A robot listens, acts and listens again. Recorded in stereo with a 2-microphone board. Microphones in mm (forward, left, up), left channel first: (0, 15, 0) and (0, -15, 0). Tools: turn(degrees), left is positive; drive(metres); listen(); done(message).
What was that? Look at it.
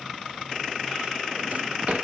turn(degrees=-50)
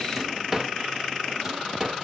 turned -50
turn(degrees=-15)
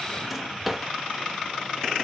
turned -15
done("Facing the drawer, under 1 m away.")